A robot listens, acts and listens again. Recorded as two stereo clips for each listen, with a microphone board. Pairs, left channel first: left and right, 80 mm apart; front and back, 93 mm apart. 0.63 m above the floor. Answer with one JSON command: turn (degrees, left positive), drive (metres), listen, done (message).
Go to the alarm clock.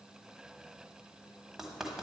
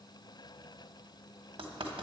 {"listen": true}
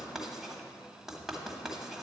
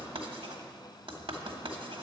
{"listen": true}
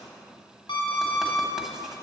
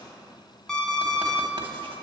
{"turn": 85}
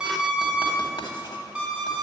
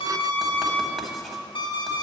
{"turn": -10}
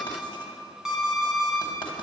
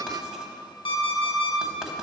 {"drive": 1.0}
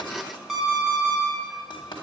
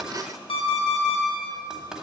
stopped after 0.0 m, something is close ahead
{"done": "Blocked. The alarm clock is further on, straight ahead."}